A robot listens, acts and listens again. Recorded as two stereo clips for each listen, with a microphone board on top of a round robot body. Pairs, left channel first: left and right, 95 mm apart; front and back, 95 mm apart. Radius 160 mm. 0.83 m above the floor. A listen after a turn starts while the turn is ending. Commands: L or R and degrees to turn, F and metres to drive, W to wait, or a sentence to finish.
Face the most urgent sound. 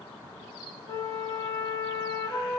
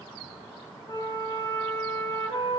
W
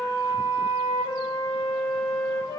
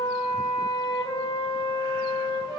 W
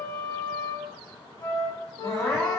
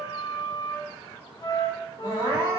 L170
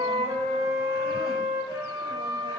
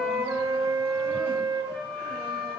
W
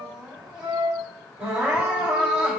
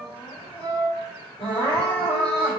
R10
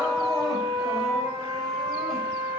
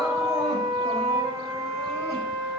W
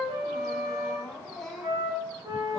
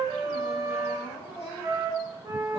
Found it: crying, straight ahead, 2 to 4 m away.